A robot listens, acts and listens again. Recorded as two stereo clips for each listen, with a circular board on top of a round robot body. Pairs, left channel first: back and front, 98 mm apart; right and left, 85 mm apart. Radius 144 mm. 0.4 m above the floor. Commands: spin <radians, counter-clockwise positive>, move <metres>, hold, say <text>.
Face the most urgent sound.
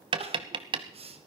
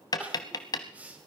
spin 0.26
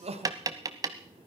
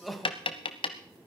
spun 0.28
say Facing the crying.